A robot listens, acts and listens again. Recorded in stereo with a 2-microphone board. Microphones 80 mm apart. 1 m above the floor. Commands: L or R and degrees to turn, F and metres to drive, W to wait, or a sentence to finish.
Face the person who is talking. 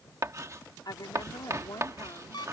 L60
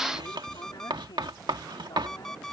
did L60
W
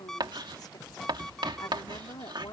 L60
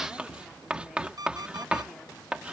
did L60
W
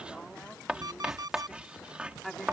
Facing the woman speaking.